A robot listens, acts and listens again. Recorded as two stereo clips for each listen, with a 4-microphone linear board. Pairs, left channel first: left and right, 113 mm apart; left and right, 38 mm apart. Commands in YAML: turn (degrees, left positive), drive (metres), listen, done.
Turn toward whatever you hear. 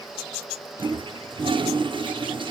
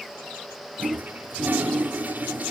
turn: -50
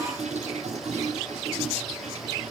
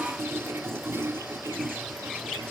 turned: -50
turn: -80
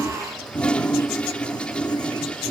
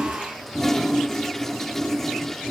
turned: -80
turn: 10
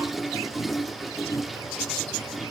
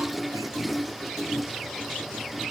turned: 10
done: "Facing the toilet flushing, under 1 m away."